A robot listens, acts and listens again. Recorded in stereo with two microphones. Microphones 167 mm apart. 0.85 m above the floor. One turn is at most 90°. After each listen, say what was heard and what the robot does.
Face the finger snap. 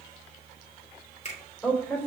The finger snap: about 45° left or 135° left. Turn 45° left.
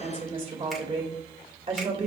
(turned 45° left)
Keep listening.
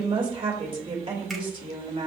Keep listening.
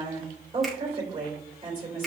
I heard a finger snap, but can't make it out now. It was about straight ahead or 90° left.